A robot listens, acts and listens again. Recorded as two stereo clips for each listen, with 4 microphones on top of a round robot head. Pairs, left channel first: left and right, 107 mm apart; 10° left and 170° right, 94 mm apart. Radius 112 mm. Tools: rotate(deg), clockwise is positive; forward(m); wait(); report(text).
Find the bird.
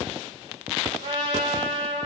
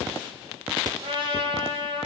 wait()
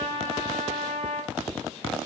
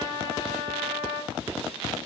wait()
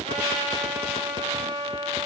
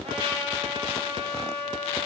report("I can't make out a bird to turn to.")